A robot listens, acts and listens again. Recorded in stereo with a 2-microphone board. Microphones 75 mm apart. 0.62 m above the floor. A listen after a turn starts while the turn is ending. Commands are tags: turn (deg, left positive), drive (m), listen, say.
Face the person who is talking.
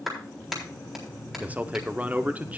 <turn deg="-20"/>
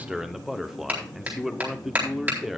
<say>Found it: a man speaking, straight ahead, 1 to 2 m away.</say>